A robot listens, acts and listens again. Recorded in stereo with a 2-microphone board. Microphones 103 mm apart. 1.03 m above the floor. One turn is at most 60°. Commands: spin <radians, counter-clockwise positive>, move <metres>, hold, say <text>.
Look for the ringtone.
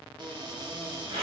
hold
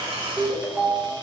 spin -0.52
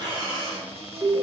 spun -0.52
spin -1.05
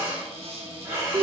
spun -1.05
spin -1.05
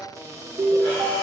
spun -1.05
spin -1.05
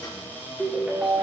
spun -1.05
spin -0.26
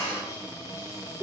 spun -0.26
say Found it: a ringtone, straight ahead, under 1 m away.